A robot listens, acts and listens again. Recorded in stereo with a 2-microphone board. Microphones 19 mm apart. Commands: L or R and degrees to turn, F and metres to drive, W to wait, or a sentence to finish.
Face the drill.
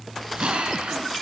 R90
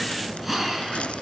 R10
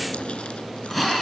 Facing the drill, over 4 m away.